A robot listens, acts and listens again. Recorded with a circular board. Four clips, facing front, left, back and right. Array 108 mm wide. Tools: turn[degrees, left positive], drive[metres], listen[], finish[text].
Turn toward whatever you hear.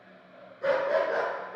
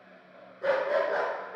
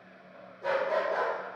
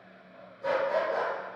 Thought: The dog barking: 50° left.
Action: turn[50]
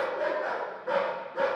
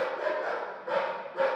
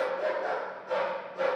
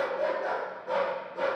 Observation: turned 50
Thought: The dog barking is now 35° left.
Action: turn[35]
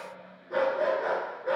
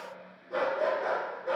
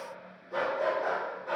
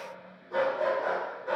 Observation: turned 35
Thought: The dog barking is now 10° left.
Action: turn[10]
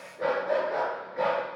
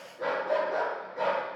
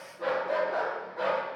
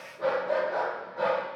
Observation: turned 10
Thought: The dog barking is now 10° left.
Action: turn[10]
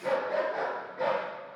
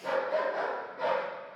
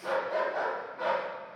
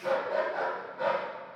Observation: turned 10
Action: finish[Found it: a dog barking, straight ahead, 1 to 2 m away.]